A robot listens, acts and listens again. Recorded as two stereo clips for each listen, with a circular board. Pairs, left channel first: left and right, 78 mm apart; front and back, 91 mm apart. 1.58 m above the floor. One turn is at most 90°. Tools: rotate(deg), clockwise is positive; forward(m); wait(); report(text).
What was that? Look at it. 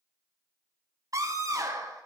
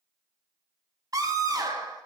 rotate(90)
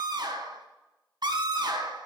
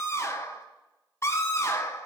rotate(60)
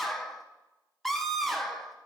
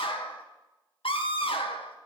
report("Found it: a scream, straight ahead, 1 to 2 m away.")